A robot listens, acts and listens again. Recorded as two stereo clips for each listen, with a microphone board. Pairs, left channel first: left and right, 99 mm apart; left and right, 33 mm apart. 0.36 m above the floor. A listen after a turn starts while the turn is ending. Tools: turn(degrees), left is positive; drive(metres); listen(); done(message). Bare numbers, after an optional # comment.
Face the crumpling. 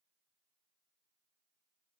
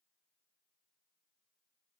listen()
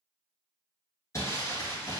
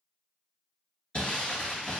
# The crumpling: about 30° left or 150° left.
turn(30)
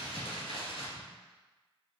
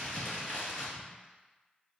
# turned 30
# So it is at 120° left.
turn(120)
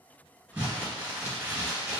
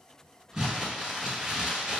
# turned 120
# The crumpling is now 10° right.
turn(-10)
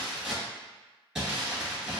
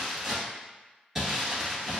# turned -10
done("Found it: crumpling, straight ahead.")